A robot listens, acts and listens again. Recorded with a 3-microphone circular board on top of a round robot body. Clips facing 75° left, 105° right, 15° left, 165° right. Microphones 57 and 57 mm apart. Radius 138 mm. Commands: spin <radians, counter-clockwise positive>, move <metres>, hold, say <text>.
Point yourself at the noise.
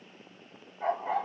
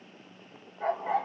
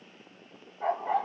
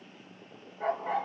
spin -2.79
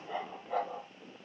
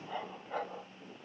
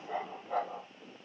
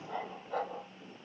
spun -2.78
say Facing the dog barking.